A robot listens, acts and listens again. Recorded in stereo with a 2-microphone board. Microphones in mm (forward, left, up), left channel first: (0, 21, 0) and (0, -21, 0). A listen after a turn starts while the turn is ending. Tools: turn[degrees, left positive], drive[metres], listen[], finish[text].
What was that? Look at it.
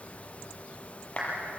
Thought: The clap: about 30° left or 150° left.
Action: turn[30]
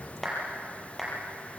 Action: finish[Found it: a clap, straight ahead, over 4 m away.]